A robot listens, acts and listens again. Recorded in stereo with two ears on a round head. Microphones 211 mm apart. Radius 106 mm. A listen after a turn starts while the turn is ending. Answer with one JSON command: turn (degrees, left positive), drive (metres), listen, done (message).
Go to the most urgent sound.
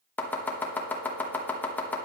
{"listen": true}
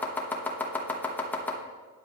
{"listen": true}
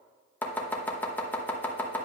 {"done": "I can't make out anything urgent to turn to."}